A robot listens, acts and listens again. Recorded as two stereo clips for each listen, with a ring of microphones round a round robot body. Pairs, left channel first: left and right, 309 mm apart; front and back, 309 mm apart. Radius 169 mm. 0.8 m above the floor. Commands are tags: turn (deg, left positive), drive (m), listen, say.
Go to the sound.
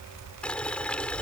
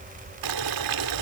<turn deg="175"/>
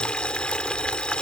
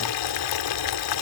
<drive m="1.0"/>
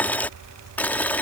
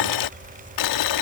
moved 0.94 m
<drive m="1.0"/>
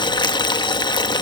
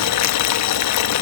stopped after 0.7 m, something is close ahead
<turn deg="15"/>
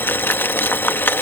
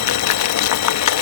<say>I am next to the boiling.</say>